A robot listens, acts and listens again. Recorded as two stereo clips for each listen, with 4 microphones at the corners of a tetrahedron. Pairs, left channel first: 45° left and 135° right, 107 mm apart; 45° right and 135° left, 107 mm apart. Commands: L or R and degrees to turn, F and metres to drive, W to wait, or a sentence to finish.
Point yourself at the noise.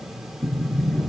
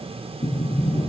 R40
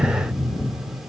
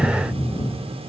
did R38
Found it: a sliding door, straight ahead.